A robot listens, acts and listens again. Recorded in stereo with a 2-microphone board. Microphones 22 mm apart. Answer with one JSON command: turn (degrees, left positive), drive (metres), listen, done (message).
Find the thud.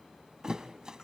{"turn": -40}
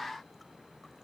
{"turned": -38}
{"listen": true}
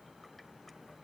{"done": "I heard a thud, but can't make it out now. It was about straight ahead or 105° right."}